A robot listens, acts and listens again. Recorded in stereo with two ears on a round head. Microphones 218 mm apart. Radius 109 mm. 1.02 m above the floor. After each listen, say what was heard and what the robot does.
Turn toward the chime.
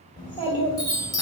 The chime: about 15° left or 165° left. Turn 15° left.
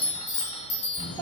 So it is at 150° left. Turn 150° left.
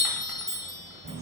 Facing the chime.